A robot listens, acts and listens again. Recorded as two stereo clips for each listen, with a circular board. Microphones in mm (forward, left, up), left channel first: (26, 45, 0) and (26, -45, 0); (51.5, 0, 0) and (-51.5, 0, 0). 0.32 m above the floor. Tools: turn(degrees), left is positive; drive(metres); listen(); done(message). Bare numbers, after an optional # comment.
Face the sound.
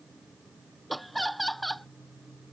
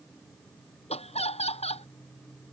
done("Found it: laughter, straight ahead.")